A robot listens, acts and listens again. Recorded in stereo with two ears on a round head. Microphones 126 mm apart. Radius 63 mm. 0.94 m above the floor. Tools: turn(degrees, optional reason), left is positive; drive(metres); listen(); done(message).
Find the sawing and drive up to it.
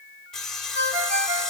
turn(degrees=30)
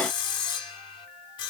turn(degrees=145, reason="So it is at 145° left.")
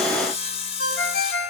turn(degrees=45, reason="The sawing is now 45° left.")
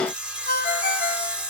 turn(degrees=-10, reason="The sawing is now 10° right.")
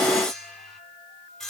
drive(metres=1.0)
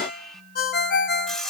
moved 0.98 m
drive(metres=1.0)
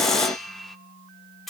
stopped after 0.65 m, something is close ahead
done("I am next to the sawing.")